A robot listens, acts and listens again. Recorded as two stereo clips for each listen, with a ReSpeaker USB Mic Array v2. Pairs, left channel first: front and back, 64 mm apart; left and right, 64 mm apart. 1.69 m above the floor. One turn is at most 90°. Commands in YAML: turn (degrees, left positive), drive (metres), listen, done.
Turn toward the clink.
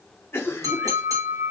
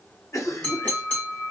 turn: 90
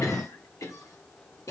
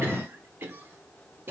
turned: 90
turn: 65
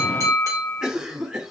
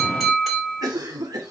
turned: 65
done: "Facing the clink, 2 to 4 m away."